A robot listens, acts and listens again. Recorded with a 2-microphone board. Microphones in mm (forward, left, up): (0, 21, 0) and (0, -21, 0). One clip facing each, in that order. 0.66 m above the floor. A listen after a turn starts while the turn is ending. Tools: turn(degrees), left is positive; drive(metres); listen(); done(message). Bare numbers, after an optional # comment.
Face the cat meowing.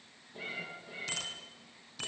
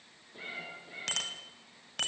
turn(-30)
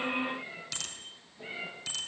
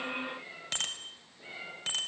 # So it is at 20° left.
turn(20)
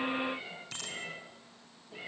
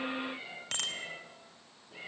done("Facing the cat meowing.")